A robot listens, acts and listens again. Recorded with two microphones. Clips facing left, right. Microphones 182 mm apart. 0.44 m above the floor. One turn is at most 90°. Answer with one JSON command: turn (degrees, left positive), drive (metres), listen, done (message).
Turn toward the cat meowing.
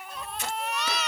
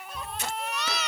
{"turn": -90}
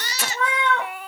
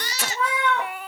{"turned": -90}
{"turn": -10}
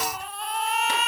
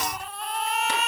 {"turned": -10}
{"listen": true}
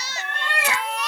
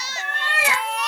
{"turn": -10}
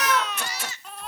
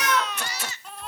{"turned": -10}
{"done": "Facing the cat meowing, 2 to 4 m away."}